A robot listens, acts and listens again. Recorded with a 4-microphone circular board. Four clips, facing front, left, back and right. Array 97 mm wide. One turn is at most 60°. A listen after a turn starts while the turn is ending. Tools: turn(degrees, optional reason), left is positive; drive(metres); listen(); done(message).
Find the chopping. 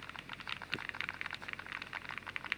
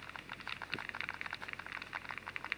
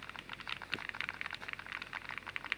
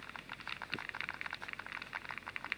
listen()
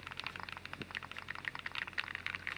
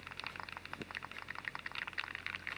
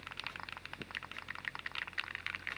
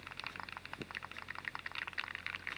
listen()
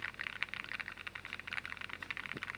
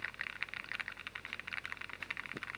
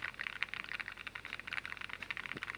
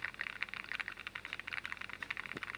done("I can't make out chopping to turn to.")